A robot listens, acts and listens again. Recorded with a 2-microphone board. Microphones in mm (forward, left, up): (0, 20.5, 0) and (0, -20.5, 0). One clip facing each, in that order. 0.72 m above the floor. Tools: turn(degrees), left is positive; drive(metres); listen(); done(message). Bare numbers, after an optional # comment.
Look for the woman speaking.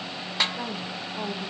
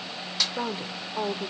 # The woman speaking: about 50° right or 130° right.
turn(-50)
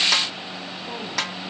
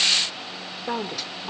# So it is at 55° right.
turn(-55)
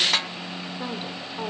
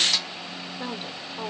done("Found it: a woman speaking, straight ahead, 2 to 4 m away.")